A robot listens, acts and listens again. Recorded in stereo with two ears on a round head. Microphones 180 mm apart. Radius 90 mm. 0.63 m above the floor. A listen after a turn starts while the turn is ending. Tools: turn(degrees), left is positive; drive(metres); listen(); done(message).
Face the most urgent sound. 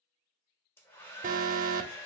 turn(degrees=-40)
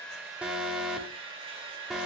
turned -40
done("Found it: an alarm, straight ahead, under 1 m away.")